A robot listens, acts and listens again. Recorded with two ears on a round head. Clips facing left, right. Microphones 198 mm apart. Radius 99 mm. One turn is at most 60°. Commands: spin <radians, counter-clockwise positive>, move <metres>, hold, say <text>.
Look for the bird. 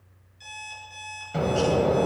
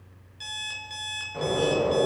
spin 1.05
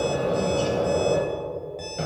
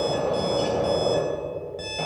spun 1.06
spin 0.35
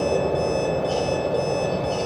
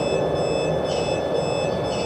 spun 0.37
say Found it: a bird, straight ahead.